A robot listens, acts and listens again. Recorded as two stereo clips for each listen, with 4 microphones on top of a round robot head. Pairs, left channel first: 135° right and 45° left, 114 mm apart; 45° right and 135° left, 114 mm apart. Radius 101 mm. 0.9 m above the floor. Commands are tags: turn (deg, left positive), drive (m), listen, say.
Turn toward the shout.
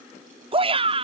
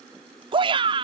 <turn deg="85"/>
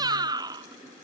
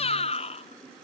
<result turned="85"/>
<turn deg="-10"/>
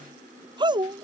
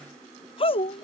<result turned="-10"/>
<say>Facing the shout.</say>